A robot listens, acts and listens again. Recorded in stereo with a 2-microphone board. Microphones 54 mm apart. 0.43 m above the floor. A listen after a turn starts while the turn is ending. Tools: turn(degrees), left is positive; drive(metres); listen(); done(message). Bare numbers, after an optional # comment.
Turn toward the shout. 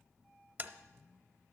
listen()
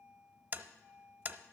listen()
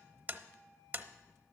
done("I can't make out a shout to turn to.")